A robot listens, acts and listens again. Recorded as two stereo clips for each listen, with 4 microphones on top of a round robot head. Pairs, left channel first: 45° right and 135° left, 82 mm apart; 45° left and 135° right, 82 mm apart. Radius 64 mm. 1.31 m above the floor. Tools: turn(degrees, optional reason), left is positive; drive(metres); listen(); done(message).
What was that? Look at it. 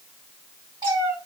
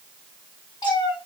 turn(degrees=85, reason="The cat meowing: 85° left.")
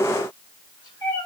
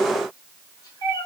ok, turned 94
turn(degrees=-10, reason="The cat meowing is now 10° right.")
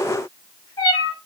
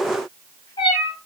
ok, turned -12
done("Facing the cat meowing.")